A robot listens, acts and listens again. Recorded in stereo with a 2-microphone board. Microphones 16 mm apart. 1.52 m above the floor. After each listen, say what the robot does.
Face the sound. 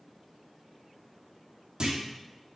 Turn 55° right.
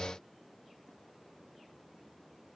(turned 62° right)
Keep listening.
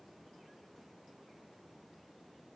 I heard a clunk, but can't make it out now. It was about 10° left or 65° right.